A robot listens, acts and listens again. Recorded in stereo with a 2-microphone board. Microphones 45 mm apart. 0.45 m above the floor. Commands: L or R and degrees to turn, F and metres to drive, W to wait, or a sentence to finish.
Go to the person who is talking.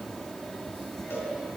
W
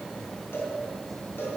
W
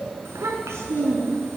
R90
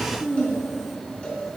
F1.0
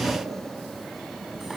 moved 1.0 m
R10
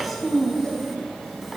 F1.0
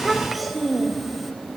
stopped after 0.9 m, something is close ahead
I am next to the child speaking.